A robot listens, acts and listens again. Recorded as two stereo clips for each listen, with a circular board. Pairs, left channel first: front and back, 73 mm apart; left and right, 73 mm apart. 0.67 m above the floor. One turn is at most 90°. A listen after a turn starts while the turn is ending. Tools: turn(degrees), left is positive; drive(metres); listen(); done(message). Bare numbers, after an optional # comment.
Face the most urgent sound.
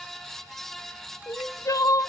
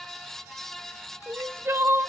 # The crying: 40° right.
turn(-40)
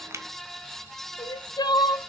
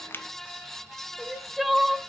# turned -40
done("Facing the crying, under 1 m away.")